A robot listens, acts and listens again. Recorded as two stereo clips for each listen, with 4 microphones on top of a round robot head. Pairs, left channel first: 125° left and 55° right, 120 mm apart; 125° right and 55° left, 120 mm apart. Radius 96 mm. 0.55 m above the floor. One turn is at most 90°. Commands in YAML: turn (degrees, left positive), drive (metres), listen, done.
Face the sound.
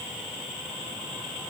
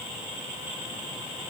listen: true
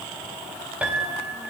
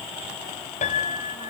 turn: -90
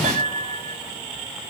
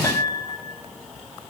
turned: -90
turn: -65
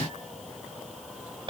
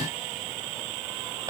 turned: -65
turn: -10
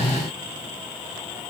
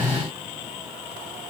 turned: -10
listen: true
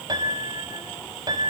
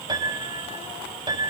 done: "Facing the piano."